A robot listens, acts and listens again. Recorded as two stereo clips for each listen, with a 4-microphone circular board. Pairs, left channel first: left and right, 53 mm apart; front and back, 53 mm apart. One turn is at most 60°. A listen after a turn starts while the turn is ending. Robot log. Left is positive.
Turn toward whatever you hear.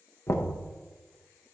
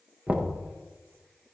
note: The knocking: 115° left.
cmd yaw +60
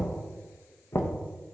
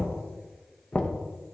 note: The knocking is now 65° left.
cmd yaw +60
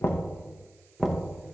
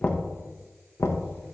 end: Facing the knocking.